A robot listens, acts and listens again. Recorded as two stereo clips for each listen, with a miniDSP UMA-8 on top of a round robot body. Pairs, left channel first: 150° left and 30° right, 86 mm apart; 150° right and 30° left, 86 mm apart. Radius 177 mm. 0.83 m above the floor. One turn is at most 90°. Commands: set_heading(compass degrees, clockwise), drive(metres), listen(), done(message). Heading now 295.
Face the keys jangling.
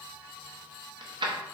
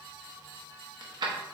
done("Found it: keys jangling, straight ahead.")